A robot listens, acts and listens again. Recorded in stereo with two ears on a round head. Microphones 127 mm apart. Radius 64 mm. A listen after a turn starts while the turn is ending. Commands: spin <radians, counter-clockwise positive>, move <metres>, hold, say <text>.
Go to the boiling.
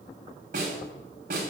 hold
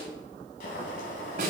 spin 1.13
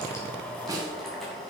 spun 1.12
move 1.0
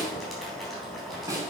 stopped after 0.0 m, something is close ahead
say Blocked. The boiling is further on, straight ahead.